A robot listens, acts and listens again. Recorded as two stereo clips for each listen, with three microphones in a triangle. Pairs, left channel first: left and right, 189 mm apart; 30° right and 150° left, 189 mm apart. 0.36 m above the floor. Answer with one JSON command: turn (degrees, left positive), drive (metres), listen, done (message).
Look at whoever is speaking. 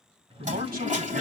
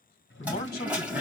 {"turn": -65}
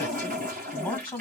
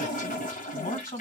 {"done": "Found it: a man speaking, straight ahead."}